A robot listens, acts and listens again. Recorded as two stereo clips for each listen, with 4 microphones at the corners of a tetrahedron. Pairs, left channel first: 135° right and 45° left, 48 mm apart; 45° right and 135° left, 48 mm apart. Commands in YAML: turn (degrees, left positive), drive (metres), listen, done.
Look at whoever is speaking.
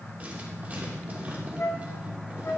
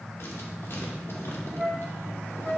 listen: true
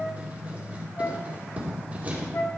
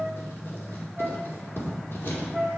listen: true
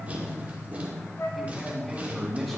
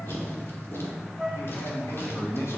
turn: -50
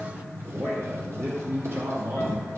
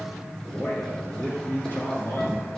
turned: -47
done: "Facing the man speaking, 2 to 4 m away."